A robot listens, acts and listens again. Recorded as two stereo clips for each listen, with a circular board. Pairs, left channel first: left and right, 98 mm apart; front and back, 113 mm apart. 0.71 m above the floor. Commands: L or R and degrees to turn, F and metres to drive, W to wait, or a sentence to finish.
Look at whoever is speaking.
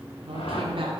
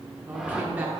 R105
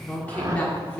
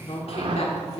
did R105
L15
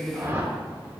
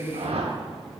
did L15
Found it: a woman speaking, straight ahead, 1 to 2 m away.